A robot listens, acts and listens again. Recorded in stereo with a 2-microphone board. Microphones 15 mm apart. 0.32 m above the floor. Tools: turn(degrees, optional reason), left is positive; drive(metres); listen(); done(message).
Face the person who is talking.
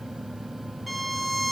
listen()
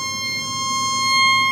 listen()
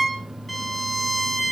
done("I can't make out anyone speaking to turn to.")